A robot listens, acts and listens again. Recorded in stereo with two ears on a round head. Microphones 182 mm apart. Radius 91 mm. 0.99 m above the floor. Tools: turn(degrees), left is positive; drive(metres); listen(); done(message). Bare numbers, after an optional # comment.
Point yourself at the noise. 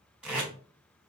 turn(-30)
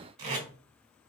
# So it is at 145° right.
turn(-145)
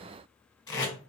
# The tape being pulled is now 20° left.
turn(20)
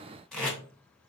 done("Found it: tape being pulled, straight ahead.")